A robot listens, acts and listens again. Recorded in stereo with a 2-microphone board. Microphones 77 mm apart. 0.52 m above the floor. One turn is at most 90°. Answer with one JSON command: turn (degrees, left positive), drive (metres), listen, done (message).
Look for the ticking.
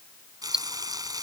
{"turn": -30}
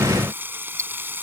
{"turn": -90}
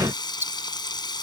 {"turn": -30}
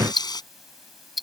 {"done": "Facing the ticking."}